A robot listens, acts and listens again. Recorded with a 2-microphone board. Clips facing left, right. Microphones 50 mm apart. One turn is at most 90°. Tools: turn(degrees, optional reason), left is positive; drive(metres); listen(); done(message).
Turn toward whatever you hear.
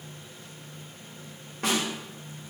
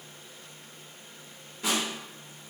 turn(degrees=55, reason="The snare drum: about 55° left or 125° left.")
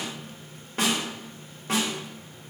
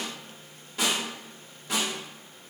turn(degrees=55, reason="So it is at 55° left.")
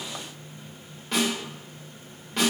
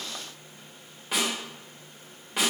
turn(degrees=-10, reason="The snare drum is now 10° right.")
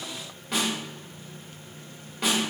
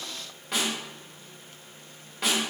done("Found it: a snare drum, straight ahead, 1 to 2 m away.")